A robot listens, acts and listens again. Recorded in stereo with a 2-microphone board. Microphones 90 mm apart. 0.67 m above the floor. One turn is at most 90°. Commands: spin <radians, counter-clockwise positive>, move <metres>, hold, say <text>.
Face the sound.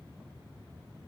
hold
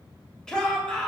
spin 0.52
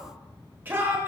spin -0.44
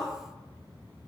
hold
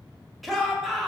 say Found it: a shout, straight ahead, 1 to 2 m away.